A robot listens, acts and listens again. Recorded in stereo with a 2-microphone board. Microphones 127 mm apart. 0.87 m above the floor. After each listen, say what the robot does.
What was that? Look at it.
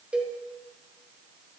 Turn 30° right.
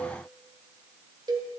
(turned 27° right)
Turn 145° right.
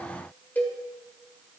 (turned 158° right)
Turn 15° left.
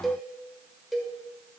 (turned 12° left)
Found it: a cowbell, straight ahead.